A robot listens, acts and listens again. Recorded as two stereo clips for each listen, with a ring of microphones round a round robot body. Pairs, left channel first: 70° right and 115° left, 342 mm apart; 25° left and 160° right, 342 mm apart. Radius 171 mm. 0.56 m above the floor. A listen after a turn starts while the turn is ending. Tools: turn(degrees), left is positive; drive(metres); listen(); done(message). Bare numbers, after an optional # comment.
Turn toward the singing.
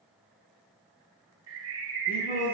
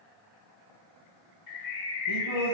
done("Facing the singing, 2 to 4 m away.")